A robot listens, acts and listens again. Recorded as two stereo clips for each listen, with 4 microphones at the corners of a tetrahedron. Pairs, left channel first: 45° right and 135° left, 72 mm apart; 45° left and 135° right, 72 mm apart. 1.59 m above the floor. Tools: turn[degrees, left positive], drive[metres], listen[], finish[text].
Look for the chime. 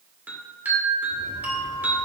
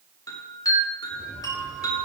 Thought: The chime: 70° left.
Action: turn[70]
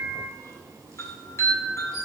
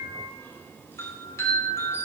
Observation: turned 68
Action: finish[Facing the chime.]